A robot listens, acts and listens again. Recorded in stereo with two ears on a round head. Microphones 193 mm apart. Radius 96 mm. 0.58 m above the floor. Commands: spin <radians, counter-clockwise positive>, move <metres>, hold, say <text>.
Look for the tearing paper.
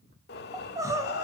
hold
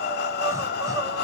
hold
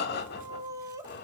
say I can't make out tearing paper to turn to.